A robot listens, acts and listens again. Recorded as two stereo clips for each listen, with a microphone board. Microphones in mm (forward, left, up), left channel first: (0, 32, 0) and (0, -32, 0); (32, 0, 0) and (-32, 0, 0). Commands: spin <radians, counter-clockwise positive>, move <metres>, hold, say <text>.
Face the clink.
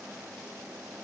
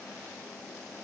hold
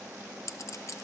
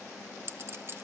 spin 2.36
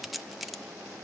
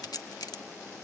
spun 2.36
say Facing the clink.